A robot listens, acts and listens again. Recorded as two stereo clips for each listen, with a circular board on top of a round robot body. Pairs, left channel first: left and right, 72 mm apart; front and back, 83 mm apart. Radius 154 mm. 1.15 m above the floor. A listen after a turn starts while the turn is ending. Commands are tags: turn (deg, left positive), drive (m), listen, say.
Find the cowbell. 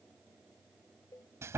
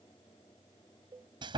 <turn deg="140"/>
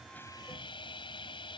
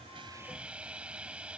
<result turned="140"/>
<listen/>
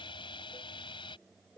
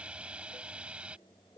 <turn deg="30"/>
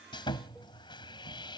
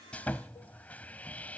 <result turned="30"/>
<listen/>
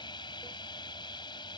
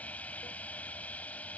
<listen/>
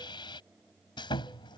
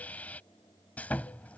<say>Facing where the cowbell came from. I can't hear it now.</say>